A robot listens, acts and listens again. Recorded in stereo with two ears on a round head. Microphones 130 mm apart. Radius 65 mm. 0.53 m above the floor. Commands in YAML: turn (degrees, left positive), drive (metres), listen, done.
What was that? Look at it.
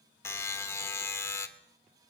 turn: 20
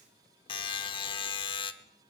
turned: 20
turn: 140
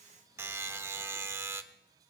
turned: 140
turn: -20
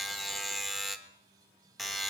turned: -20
done: "Found it: a buzzer, straight ahead, 1 to 2 m away."